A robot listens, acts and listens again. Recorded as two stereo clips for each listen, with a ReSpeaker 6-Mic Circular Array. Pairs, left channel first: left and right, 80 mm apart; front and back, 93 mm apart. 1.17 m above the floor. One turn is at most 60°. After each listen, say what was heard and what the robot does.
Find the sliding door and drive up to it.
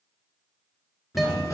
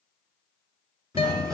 The sliding door: 135° left. Turn 60° left.
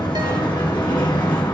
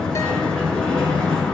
The sliding door is now 80° left. Turn 60° left.
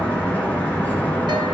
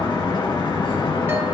The sliding door is now 25° left. Turn 25° left.
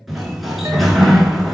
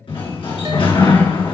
Drive 1.0 m forward.
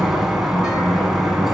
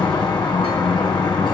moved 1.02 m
Drive 1.0 m forward.
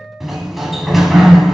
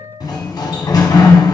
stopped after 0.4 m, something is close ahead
I am next to the sliding door.